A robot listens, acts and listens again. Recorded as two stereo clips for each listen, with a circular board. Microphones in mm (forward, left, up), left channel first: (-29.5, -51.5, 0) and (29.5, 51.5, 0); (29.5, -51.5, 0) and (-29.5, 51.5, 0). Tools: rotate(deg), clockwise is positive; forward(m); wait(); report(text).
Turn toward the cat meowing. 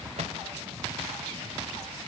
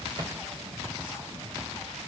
wait()
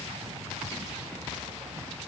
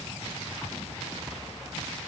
wait()
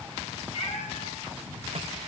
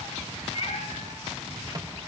rotate(110)
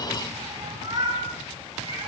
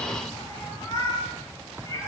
report("Facing the cat meowing, over 4 m away.")